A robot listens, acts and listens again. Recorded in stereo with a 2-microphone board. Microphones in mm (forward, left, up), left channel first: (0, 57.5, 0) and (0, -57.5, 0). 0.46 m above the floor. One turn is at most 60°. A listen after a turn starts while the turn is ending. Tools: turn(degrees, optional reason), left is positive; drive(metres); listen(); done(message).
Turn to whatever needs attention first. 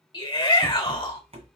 turn(degrees=40, reason="The shout: about 40° left or 140° left.")
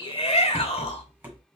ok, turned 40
turn(degrees=60, reason="So it is at 90° left.")
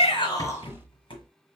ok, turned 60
turn(degrees=30, reason="Nothing new. It was at 30° left.")
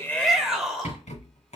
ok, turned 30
done("Found it: a shout, straight ahead, 1 to 2 m away.")